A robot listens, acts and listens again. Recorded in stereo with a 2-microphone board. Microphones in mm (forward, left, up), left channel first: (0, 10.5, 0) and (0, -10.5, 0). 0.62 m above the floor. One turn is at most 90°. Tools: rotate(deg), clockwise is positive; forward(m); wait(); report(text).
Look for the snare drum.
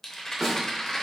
rotate(20)
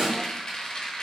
rotate(90)
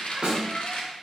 rotate(65)
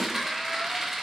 wait()
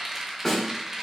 rotate(-20)
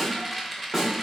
report("Facing the snare drum, 1 to 2 m away.")